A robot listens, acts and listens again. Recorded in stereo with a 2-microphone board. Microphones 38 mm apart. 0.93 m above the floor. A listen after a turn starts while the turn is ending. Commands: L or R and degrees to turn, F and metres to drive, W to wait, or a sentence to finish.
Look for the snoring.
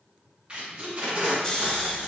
L25
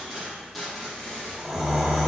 Facing the snoring.